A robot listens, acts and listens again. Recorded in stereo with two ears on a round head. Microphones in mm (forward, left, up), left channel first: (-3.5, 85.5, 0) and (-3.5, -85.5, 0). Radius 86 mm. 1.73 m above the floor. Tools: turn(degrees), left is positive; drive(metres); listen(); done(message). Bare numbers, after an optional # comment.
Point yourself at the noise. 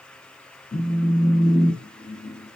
# The phone buzzing: about 30° left or 150° left.
turn(30)
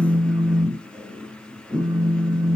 done("Facing the phone buzzing.")